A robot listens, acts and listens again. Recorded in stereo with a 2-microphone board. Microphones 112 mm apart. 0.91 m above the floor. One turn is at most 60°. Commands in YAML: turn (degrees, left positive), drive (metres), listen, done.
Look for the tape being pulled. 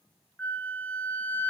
listen: true
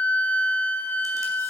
listen: true
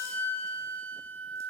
done: "I can't make out tape being pulled, only a flute."